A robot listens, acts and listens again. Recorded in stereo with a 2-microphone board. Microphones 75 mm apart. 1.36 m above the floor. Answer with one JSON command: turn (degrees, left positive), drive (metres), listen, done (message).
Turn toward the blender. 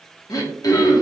{"listen": true}
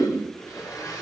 {"turn": 50}
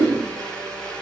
{"turn": 15}
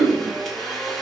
{"done": "Facing the blender, 1 to 2 m away."}